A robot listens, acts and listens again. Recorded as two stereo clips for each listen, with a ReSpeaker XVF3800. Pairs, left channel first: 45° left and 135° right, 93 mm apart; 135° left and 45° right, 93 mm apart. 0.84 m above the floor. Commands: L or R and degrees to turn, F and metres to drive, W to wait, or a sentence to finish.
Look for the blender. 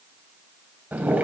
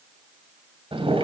W
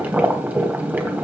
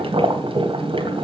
W
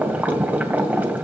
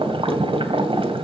I can't make out a blender, only boiling.